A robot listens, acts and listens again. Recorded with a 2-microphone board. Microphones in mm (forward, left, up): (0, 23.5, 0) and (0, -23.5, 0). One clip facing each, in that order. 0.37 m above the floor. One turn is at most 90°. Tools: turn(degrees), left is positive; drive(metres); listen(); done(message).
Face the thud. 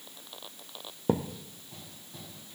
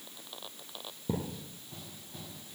turn(degrees=65)
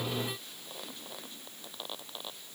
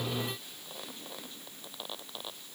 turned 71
listen()
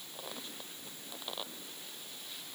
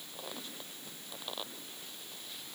done("I heard a thud, but can't make it out now. It was about 10° right or 45° left.")